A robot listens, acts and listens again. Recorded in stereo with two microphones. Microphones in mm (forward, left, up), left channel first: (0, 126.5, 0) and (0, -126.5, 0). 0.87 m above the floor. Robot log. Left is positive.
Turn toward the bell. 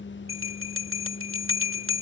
note: The bell: about 55° right or 125° right.
cmd yaw -55
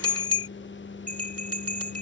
note: So it is at 70° right.
cmd yaw -70
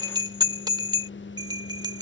note: The bell is now 15° right.
cmd yaw -15
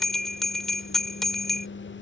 end: Facing the bell.